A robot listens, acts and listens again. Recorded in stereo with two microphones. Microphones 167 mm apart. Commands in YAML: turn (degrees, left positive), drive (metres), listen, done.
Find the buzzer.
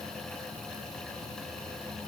listen: true
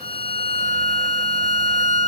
listen: true
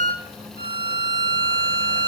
done: "I can't make out a buzzer to turn to."